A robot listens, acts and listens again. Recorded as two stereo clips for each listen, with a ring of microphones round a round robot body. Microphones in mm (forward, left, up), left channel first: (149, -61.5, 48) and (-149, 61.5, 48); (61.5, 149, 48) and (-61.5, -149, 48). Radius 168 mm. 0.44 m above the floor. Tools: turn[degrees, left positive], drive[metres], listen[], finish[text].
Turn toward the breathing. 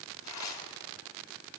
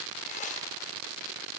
Action: listen[]
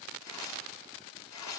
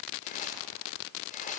Action: listen[]
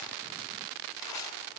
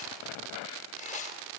Action: finish[I can't make out breathing to turn to.]